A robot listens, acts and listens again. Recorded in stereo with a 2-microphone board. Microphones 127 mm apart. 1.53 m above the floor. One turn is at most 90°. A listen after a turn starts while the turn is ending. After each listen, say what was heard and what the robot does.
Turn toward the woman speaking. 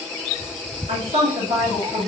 Turn 90° right.
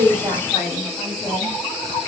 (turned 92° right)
Found it: a woman speaking, straight ahead.